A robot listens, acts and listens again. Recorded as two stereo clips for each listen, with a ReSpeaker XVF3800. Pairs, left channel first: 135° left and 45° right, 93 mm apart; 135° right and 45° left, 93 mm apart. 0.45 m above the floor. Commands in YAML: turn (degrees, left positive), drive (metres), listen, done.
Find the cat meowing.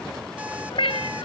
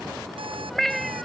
turn: 140
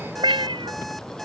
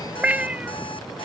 turn: -30
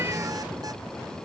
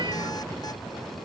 listen: true
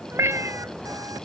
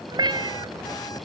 turn: 15
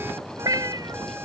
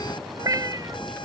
done: "Facing the cat meowing."